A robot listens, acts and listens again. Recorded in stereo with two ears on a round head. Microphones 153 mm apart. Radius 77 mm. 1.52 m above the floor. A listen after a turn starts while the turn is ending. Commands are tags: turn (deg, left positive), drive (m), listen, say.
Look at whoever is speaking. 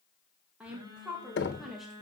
<turn deg="30"/>
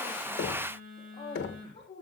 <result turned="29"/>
<turn deg="145"/>
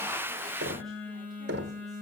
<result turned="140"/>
<listen/>
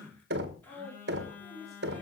<say>Facing the woman speaking.</say>